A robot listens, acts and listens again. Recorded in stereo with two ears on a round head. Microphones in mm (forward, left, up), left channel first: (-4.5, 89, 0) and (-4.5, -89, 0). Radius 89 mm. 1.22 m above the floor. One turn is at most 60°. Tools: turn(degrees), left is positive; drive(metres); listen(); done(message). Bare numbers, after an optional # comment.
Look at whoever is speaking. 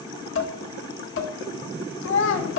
# The child speaking: about 65° left or 115° left.
turn(60)
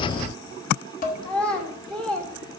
done("Facing the child speaking, 1 to 2 m away.")